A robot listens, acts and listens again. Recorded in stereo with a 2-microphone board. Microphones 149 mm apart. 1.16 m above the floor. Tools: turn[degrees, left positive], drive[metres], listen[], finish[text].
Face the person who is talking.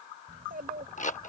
Action: turn[-90]
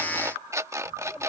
Action: finish[Facing the child speaking.]